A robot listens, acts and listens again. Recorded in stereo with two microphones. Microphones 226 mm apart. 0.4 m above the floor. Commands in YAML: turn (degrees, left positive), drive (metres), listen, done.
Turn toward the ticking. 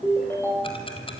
turn: 25
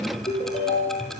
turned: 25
done: "Facing the ticking."